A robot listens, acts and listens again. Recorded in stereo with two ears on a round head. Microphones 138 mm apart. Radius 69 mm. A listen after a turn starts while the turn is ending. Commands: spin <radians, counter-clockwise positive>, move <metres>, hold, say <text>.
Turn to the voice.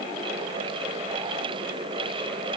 hold
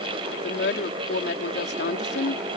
spin 1.31
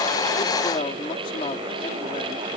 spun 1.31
spin 0.61
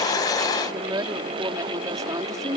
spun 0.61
spin -0.35
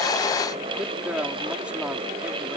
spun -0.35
say Facing the woman speaking.